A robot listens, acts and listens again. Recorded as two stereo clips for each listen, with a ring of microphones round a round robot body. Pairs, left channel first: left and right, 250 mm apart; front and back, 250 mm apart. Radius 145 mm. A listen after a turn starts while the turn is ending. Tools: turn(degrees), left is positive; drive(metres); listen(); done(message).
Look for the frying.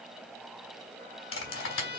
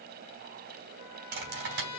listen()
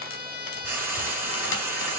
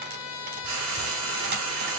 turn(degrees=-170)
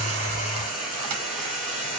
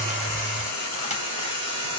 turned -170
done("Facing the frying, 2 to 4 m away.")